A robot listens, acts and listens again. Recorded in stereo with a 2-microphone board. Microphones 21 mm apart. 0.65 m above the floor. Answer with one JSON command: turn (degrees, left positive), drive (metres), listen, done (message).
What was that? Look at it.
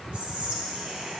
{"turn": -55}
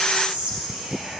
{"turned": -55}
{"turn": -50}
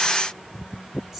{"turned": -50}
{"listen": true}
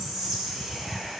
{"turn": -15}
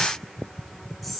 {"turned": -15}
{"done": "Facing the whispering."}